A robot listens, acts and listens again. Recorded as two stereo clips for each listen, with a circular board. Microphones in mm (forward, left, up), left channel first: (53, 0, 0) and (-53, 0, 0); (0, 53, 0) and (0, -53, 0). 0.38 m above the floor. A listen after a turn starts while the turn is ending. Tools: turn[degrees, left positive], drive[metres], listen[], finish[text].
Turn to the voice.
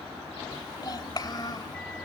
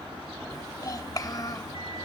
Thought: The child speaking: 45° left.
Action: turn[45]
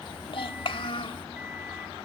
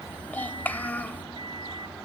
Thought: The child speaking is now 20° left.
Action: turn[20]
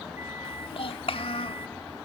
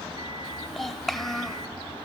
Action: finish[Facing the child speaking.]